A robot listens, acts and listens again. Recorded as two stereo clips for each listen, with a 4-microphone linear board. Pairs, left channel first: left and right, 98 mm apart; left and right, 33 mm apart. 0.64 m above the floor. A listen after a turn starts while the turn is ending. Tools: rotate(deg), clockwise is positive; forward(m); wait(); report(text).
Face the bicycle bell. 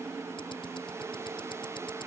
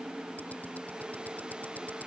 wait()
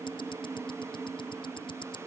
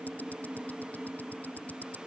wait()
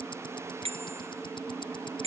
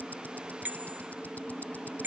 rotate(90)
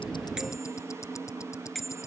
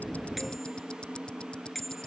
report("Facing the bicycle bell.")